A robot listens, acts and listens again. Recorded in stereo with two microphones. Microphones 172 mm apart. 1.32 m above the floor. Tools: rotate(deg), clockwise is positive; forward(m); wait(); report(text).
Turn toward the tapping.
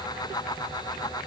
wait()
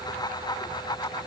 wait()
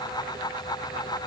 report("I can't make out tapping.")